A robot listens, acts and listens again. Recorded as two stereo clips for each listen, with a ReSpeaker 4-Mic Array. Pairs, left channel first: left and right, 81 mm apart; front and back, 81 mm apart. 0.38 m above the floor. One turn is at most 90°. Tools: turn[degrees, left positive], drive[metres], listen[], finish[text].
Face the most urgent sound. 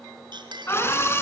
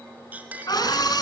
Thought: The scream: 30° left.
Action: turn[30]
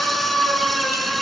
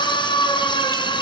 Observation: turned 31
Action: finish[Found it: a scream, straight ahead.]